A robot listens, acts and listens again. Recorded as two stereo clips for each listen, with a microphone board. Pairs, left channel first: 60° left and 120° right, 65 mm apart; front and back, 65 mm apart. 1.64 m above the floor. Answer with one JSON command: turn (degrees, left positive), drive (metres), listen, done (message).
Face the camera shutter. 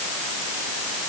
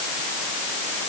{"listen": true}
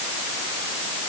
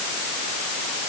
{"listen": true}
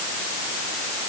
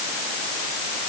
{"done": "I can't make out a camera shutter to turn to."}